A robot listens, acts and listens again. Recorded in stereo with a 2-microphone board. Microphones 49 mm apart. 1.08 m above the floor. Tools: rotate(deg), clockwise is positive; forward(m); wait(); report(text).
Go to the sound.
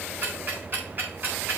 rotate(35)
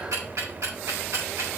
rotate(105)
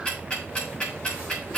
rotate(-15)
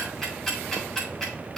forward(1.0)
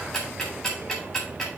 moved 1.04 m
forward(1.0)
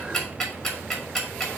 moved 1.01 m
forward(1.0)
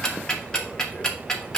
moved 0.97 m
rotate(-15)
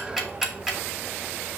forward(1.0)
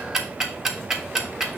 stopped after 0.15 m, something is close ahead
rotate(10)
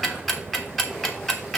report("I am next to the ticking.")